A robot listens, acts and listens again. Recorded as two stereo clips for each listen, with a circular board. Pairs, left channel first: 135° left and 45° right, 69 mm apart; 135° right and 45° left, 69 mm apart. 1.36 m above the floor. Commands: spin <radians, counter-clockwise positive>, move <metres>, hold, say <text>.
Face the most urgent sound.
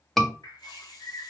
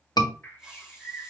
spin -2.44
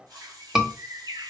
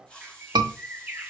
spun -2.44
spin 0.61
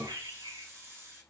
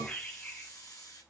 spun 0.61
hold
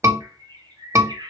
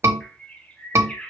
say Found it: a scream, straight ahead.